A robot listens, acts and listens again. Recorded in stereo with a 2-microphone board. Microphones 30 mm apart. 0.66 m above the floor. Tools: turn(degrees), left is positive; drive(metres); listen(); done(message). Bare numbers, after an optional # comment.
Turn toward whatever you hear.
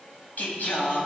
# The singing: about 75° left or 105° left.
turn(75)
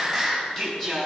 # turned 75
# So it is at 15° left.
turn(15)
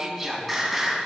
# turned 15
done("Facing the singing.")